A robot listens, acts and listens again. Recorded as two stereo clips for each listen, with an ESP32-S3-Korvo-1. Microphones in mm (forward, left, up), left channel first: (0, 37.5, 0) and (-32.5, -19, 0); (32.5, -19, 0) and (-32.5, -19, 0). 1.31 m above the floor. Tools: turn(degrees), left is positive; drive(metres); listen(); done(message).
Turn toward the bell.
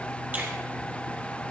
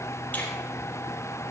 listen()
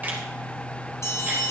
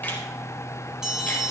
turn(degrees=100)
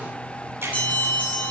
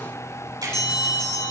turn(degrees=-10)
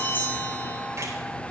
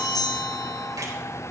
done("Facing the bell, over 4 m away.")